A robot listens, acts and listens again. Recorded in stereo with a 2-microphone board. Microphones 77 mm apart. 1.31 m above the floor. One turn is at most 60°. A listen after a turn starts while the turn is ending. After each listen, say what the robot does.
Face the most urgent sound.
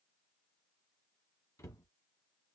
Keep listening.
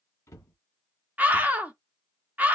Turn 20° right.
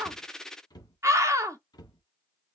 Turn 60° right.
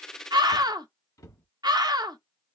Turn 60° right.
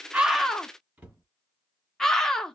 Facing the scream.